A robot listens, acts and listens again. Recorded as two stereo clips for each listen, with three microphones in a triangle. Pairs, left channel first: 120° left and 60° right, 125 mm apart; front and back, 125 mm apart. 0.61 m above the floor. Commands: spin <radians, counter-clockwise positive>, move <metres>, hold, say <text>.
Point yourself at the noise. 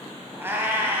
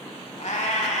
spin 0.17
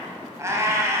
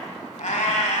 say Facing the cat meowing, 1 to 2 m away.